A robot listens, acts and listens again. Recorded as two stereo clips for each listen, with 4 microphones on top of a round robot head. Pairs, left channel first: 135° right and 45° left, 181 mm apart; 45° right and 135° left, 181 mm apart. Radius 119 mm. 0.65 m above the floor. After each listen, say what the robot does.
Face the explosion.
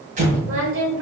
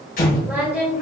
Facing the explosion, 1 to 2 m away.